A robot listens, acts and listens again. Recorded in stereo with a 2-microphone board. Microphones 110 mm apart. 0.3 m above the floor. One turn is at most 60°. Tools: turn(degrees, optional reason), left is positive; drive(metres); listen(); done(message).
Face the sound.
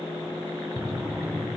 turn(degrees=-30)
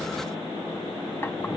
listen()
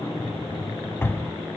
turn(degrees=25, reason="So it is at 25° left.")
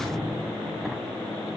done("Found it: a drawer, straight ahead, under 1 m away.")